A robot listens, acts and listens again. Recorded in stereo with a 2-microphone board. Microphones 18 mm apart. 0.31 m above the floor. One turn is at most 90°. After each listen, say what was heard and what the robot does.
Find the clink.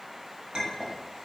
The clink: about 50° right or 130° right. Turn 50° right.
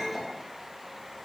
So it is at 65° right. Turn 65° right.
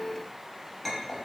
Found it: a clink, straight ahead, under 1 m away.